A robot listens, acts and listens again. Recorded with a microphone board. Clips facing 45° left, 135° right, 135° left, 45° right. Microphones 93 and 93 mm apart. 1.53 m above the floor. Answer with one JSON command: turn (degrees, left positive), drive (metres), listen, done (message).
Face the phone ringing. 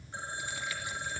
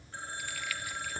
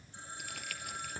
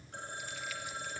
{"turn": -25}
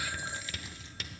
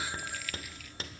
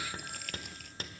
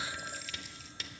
{"listen": true}
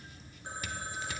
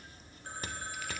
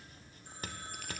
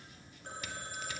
{"turn": -25}
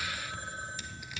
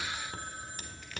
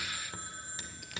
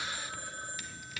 {"turn": -10}
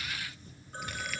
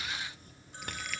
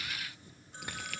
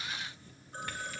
{"done": "Facing the phone ringing, 2 to 4 m away."}